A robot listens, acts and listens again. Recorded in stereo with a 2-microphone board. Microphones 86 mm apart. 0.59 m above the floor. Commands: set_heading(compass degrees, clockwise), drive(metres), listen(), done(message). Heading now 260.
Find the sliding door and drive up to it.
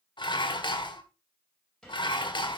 set_heading(230)
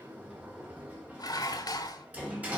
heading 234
set_heading(249)
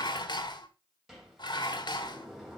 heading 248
drive(1.0)
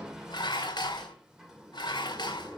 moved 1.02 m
drive(1.0)
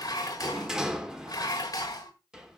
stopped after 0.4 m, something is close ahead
done("Arrived at the sliding door, straight ahead.")